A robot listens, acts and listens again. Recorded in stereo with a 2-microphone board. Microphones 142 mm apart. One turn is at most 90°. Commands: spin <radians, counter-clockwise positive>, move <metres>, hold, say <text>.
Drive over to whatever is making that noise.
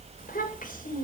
spin 1.22
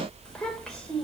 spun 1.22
move 1.0
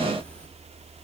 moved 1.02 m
hold
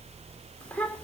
spin 0.17
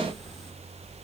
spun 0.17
hold
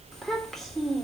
move 1.0
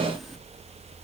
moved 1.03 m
hold
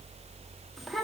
move 1.0
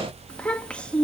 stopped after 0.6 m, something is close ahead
say Arrived at the child speaking, straight ahead.